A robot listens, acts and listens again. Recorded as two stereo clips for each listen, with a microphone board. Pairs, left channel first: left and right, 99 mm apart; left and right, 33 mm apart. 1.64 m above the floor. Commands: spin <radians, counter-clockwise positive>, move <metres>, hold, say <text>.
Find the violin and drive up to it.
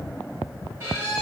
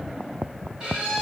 spin -0.44
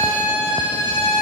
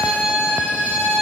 spin -2.27
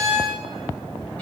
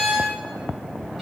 spin 0.17
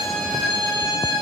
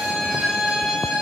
move 1.0
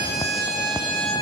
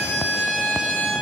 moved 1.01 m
move 1.0
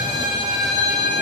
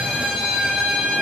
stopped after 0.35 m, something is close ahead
say I am next to the violin.